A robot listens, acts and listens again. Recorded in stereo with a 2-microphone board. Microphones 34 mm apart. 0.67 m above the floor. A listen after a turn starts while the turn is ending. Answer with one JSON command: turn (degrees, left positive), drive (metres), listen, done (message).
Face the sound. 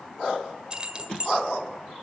{"turn": -30}
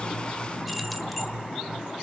{"listen": true}
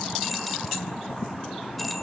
{"listen": true}
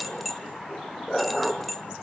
{"done": "Found it: keys jangling, straight ahead."}